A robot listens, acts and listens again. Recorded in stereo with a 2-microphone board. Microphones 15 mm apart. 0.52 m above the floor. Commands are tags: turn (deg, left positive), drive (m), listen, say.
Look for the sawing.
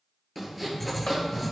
<turn deg="30"/>
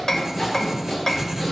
<turn deg="145"/>
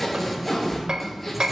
<say>Facing the sawing, over 4 m away.</say>